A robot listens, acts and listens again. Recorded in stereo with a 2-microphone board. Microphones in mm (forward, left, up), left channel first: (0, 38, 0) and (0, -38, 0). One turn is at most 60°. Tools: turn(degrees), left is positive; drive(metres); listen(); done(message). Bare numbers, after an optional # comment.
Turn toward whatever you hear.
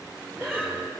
# The breathing: about 30° right or 150° right.
turn(-30)
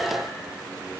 listen()
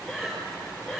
done("Facing the breathing, over 4 m away.")